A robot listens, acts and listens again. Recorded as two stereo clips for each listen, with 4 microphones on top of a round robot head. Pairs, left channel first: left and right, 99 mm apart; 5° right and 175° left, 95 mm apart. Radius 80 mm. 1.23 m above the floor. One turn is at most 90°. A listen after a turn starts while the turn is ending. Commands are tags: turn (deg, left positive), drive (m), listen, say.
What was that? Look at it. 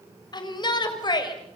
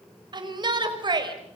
<turn deg="90"/>
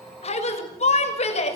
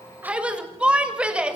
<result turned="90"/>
<turn deg="90"/>
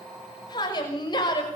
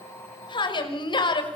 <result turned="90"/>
<turn deg="30"/>
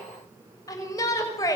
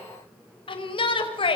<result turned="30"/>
<turn deg="25"/>
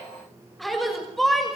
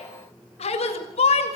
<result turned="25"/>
<say>Found it: a shout, straight ahead, over 4 m away.</say>